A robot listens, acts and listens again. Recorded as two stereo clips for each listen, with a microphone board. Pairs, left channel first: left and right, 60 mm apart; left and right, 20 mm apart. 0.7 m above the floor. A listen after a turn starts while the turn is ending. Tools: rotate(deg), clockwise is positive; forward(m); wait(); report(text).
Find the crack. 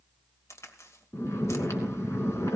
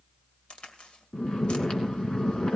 rotate(-65)
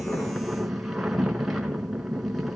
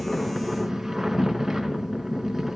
wait()
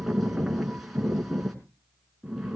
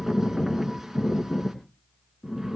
report("I heard a crack, but can't make it out now. It was about straight ahead or 50° left.")